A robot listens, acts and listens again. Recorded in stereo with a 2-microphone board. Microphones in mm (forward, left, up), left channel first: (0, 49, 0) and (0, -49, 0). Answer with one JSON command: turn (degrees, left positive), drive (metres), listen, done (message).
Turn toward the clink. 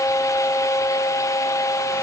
{"listen": true}
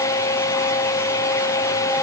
{"listen": true}
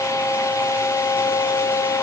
{"done": "I can't make out a clink."}